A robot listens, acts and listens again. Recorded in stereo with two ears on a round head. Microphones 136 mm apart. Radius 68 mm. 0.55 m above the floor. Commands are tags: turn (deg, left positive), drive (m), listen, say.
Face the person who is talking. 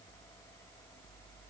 <listen/>
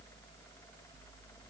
<listen/>
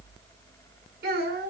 <turn deg="-90"/>
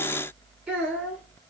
<say>Found it: a child speaking, straight ahead, over 4 m away.</say>